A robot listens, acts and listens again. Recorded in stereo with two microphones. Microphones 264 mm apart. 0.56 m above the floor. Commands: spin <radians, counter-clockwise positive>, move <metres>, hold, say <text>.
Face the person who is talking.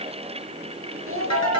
spin -0.96
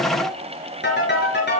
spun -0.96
hold
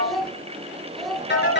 say Found it: a child speaking, straight ahead.